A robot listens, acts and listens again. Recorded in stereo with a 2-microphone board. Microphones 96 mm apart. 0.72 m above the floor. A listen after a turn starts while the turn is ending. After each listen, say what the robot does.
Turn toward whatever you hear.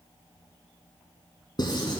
Turn 50° left.
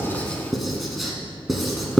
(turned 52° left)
Found it: writing, straight ahead, 1 to 2 m away.